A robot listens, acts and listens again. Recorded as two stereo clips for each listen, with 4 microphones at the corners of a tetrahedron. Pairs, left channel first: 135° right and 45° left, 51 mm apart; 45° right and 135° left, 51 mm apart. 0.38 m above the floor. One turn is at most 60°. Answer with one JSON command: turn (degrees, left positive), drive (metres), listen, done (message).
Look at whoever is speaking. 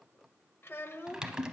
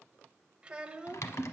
{"turn": -60}
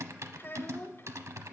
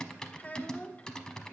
{"turn": -60}
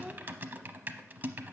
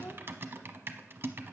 {"turn": -40}
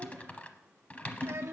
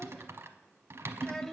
{"turn": 35}
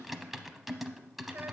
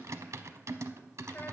{"listen": true}
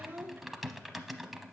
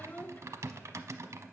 {"done": "Found it: a child speaking, straight ahead."}